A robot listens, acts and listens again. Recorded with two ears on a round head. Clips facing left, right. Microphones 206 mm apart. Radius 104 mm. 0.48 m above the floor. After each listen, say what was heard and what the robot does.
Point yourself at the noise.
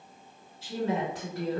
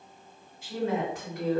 The woman speaking: about 30° left or 150° left. Turn 30° left.
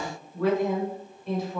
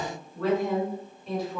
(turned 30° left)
Found it: a woman speaking, straight ahead, 1 to 2 m away.